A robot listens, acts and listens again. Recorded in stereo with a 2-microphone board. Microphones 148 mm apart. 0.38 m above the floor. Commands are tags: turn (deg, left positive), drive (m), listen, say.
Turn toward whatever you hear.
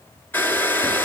<turn deg="30"/>
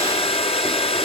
<turn deg="140"/>
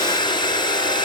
<turn deg="30"/>
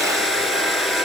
<say>Facing the hair dryer, 2 to 4 m away.</say>